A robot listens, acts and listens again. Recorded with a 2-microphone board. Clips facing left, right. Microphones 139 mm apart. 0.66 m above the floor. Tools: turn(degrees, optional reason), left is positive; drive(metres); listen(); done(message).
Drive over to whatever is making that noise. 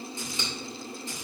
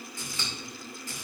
turn(degrees=20, reason="The scissors: about 20° left or 160° left.")
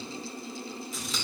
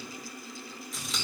drive(metres=1.0)
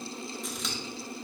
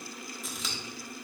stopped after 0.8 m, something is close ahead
done("Arrived at the scissors, straight ahead.")